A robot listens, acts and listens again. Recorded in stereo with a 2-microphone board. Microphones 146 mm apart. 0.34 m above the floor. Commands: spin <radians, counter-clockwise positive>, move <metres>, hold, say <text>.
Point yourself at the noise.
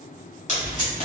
spin 1.05
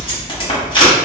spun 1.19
spin 0.70
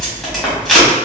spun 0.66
say Facing the tape being pulled.